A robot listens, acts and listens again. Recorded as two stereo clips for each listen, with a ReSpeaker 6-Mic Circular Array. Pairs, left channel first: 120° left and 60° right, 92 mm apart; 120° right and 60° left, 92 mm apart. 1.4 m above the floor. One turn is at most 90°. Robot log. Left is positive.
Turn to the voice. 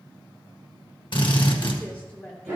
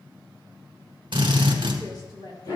note: The woman speaking: 165° right.
cmd yaw -90
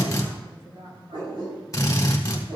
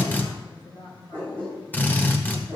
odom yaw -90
note: The woman speaking is now 85° right.
cmd yaw -85
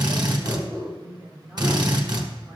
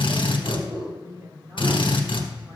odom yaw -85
end: Facing the woman speaking.